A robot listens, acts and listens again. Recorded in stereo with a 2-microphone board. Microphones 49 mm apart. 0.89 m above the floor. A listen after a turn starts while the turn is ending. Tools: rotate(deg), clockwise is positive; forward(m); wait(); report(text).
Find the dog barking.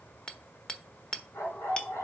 rotate(-90)
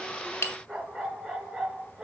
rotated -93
rotate(15)
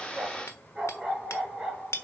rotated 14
rotate(10)
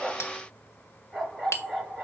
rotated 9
report("Found it: a dog barking, straight ahead, over 4 m away.")